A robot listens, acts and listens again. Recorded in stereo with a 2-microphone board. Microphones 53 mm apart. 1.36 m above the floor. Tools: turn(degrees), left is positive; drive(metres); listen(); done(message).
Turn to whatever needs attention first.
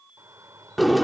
turn(degrees=-90)
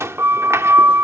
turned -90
listen()
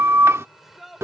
done("Facing the shout.")